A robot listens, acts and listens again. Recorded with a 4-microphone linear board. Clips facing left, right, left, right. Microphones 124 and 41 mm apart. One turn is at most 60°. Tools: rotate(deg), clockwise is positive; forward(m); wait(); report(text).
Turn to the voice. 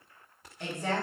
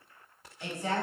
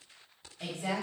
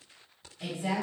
rotate(-55)
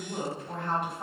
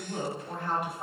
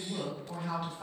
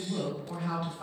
report("Facing the woman speaking, 1 to 2 m away.")